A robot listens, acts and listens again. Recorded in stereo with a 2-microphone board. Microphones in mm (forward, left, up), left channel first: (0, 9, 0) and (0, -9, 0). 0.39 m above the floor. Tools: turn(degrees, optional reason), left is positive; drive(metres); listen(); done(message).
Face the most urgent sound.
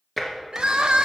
turn(degrees=-60, reason="The crying: about 60° right or 120° right.")
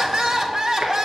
turn(degrees=-30, reason="So it is at 30° right.")
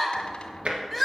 done("Found it: crying, straight ahead.")